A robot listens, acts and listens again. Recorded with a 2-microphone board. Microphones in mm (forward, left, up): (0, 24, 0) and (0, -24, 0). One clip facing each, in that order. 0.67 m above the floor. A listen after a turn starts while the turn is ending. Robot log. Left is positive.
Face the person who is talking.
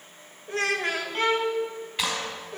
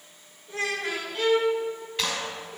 note: The child speaking: about 60° left or 120° left.
cmd yaw +60
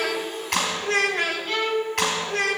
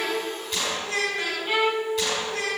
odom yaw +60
note: So it is at 60° left.
cmd yaw +60
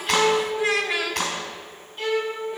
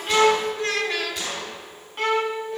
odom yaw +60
note: The child speaking is now 10° left.
cmd yaw +10
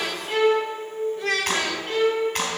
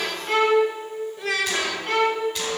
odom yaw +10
end: Facing the child speaking.